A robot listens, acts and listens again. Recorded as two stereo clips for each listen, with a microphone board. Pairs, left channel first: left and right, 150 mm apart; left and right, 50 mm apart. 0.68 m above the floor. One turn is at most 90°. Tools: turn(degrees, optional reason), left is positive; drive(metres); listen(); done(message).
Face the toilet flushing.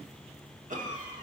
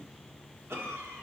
listen()
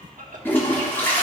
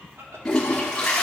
turn(degrees=30)
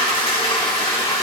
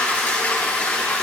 turn(degrees=90, reason="So it is at 135° left.")
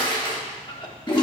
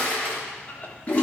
turn(degrees=40, reason="The toilet flushing is now 40° left.")
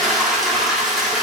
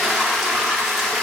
done("Found it: a toilet flushing, straight ahead, 1 to 2 m away.")